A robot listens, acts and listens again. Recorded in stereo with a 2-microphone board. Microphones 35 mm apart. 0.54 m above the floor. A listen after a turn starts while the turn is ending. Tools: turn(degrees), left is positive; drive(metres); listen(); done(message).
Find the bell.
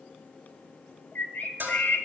turn(degrees=-65)
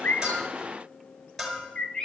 done("Facing the bell.")